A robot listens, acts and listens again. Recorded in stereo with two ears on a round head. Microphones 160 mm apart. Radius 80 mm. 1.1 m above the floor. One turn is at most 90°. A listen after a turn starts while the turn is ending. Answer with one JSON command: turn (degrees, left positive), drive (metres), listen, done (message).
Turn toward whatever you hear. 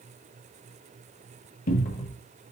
{"turn": 50}
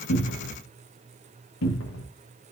{"turn": 80}
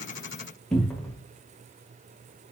{"done": "Found it: a cupboard door, straight ahead."}